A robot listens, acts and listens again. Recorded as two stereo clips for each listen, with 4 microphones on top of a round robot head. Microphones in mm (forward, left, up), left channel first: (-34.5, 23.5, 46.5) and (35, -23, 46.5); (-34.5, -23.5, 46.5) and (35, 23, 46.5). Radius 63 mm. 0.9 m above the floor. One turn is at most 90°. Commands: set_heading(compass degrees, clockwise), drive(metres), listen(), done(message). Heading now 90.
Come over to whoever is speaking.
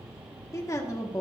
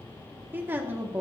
set_heading(0)
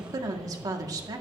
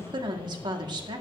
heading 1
set_heading(351)
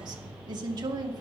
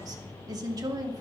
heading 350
drive(1.0)
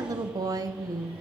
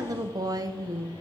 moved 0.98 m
drive(1.0)
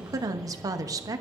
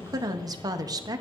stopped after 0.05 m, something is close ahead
done("Arrived at the woman speaking, straight ahead.")